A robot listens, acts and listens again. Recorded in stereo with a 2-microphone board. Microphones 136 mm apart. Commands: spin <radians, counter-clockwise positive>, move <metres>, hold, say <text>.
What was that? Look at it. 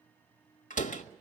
spin 1.22
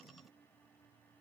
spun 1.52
hold
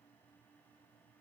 say I heard a door slam, but can't make it out now. It was about 15° right or 25° left.